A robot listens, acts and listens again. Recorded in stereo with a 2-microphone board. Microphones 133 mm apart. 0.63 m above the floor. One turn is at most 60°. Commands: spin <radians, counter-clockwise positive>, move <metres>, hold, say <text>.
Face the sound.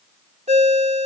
spin -0.96
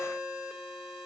say Facing the ringtone, 1 to 2 m away.